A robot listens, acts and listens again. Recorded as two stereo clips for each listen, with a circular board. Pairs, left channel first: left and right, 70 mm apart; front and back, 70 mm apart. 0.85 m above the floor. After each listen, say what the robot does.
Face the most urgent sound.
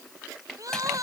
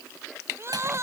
Turn 130° right.
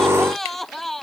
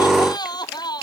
Found it: crying, straight ahead.